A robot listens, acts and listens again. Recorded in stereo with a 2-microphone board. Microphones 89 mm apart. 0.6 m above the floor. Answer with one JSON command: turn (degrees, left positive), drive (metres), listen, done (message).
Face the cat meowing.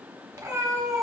{"turn": -40}
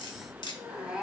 {"turn": -10}
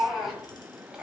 {"turn": -10}
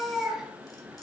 {"turn": -10}
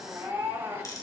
{"turn": -30}
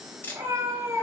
{"turn": -35}
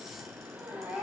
{"turn": -15}
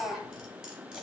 {"done": "Facing the cat meowing, 1 to 2 m away."}